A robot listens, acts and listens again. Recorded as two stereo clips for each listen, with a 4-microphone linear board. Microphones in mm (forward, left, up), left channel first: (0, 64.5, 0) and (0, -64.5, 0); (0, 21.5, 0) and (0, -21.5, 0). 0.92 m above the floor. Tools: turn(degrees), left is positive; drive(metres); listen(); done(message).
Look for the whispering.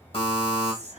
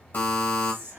turn(degrees=-60)
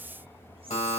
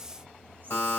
listen()
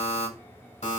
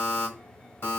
listen()
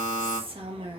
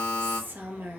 turn(degrees=-50)
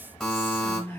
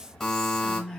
turn(degrees=15)
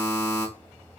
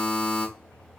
listen()
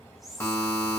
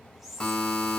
done("Found it: whispering, straight ahead.")